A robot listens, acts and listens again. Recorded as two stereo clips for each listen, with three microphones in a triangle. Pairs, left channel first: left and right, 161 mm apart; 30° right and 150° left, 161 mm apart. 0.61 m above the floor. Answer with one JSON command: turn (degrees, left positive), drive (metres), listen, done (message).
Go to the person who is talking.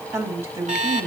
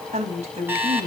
{"turn": -165}
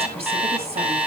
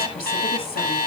{"listen": true}
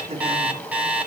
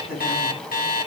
{"turn": -40}
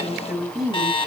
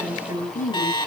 {"drive": 1.0}
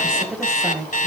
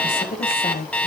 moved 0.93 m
{"drive": 1.0}
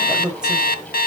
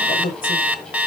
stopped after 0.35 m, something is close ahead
{"done": "Something is in my way. I am facing the woman speaking but have not reached it."}